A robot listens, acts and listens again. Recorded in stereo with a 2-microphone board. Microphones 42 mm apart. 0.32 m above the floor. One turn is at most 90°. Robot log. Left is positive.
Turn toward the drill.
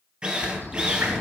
note: The drill: about 25° right or 155° right.
cmd yaw -25
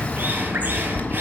cmd idle
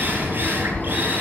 note: So it is at 130° right.
cmd yaw -90
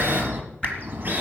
note: Nothing new. It was at 40° right.
cmd yaw -40
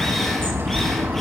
cmd idle
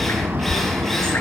end: I heard a drill from this way, but can't make it out now.